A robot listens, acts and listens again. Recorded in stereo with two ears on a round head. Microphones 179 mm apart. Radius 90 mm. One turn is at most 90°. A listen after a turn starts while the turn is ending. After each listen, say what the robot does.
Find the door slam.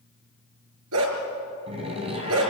Turn 30° right.
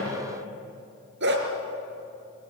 Keep listening.
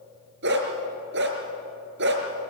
I heard a door slam, but can't make it out now. It was about straight ahead or 120° right.